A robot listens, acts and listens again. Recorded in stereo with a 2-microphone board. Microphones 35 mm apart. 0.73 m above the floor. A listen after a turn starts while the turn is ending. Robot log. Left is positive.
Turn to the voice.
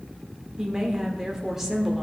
cmd yaw -30
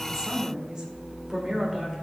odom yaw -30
cmd yaw -30
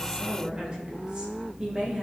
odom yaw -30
note: So it is at 155° right.
cmd yaw -155
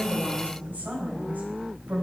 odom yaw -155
note: The woman speaking is now 60° right.
cmd yaw -60
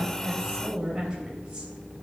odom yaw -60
note: The woman speaking is now 25° right.
cmd yaw -25
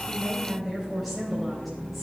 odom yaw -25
end: Found it: a woman speaking, straight ahead.